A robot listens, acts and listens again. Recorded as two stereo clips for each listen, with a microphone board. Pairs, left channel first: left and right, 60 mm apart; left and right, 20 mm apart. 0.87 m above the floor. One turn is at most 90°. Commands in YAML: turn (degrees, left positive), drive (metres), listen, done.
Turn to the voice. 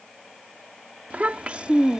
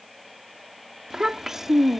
turn: -20
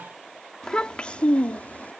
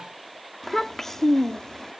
turn: 25
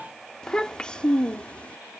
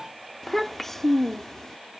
turn: 20
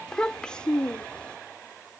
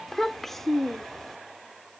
turn: 15
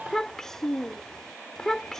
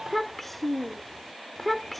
done: "Found it: a child speaking, straight ahead."